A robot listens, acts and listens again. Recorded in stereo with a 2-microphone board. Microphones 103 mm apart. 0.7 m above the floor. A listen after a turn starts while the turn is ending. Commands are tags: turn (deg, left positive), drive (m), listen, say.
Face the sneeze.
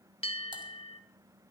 <listen/>
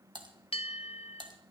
<listen/>
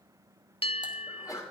<turn deg="35"/>
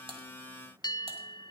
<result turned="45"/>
<listen/>
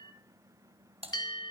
<say>I heard a sneeze, but can't make it out now. It was about 10° right or 100° left.</say>